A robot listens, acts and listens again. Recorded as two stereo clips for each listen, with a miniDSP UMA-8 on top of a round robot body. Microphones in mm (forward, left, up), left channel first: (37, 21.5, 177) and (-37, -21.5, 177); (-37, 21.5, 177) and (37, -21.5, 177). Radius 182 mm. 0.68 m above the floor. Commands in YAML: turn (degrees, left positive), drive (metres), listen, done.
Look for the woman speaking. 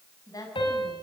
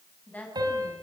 turn: 80
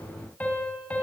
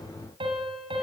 listen: true
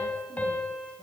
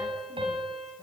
listen: true
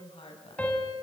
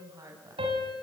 turn: 25
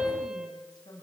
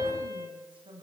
turn: -10
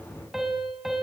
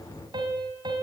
listen: true
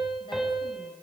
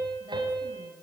listen: true
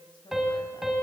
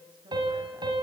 done: "Found it: a woman speaking, straight ahead, over 4 m away."